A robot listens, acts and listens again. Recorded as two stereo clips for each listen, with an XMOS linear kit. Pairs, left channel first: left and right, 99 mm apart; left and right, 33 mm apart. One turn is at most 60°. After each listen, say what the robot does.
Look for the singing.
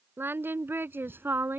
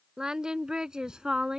Turn 25° right.
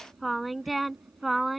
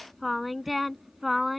Found it: singing, straight ahead.